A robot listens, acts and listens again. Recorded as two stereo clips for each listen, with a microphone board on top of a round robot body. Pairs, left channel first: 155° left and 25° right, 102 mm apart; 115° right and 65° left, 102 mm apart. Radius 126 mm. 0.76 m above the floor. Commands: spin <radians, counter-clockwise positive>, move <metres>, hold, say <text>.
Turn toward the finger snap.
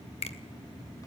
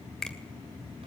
spin 2.88
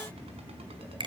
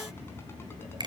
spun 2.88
spin 0.35
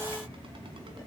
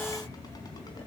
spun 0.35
hold
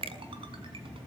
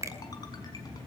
say Facing the finger snap, 2 to 4 m away.